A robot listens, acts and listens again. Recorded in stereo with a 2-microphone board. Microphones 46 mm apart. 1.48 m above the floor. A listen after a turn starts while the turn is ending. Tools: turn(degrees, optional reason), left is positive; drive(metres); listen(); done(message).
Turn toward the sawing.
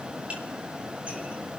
listen()
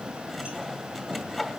turn(degrees=30)
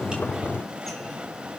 listen()
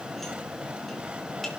listen()
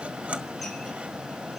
turn(degrees=-30, reason="So it is at 30° right.")
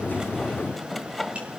done("Facing the sawing, 1 to 2 m away.")